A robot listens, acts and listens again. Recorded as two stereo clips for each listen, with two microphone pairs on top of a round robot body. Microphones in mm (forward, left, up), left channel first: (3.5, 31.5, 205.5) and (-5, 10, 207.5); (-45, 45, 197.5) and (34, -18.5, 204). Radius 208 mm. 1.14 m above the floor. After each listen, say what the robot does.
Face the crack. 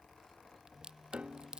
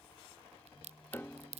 Turn 50° right.
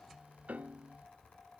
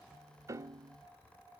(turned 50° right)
Facing where the crack came from. I can't hear it now.